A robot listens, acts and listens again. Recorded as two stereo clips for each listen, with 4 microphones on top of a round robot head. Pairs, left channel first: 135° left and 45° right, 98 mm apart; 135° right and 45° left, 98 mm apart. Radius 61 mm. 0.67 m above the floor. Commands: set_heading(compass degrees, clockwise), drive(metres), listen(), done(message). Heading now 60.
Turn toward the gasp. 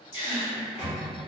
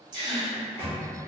set_heading(325)
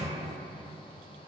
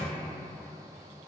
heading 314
set_heading(329)
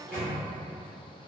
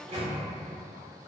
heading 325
done("Facing where the gasp came from. I can't hear it now.")